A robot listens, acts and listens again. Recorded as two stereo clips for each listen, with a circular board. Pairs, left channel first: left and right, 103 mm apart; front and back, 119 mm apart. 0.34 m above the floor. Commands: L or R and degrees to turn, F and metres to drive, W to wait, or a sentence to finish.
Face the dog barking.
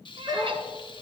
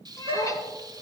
R145
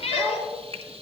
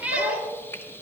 L15
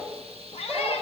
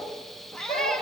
Facing the dog barking, over 4 m away.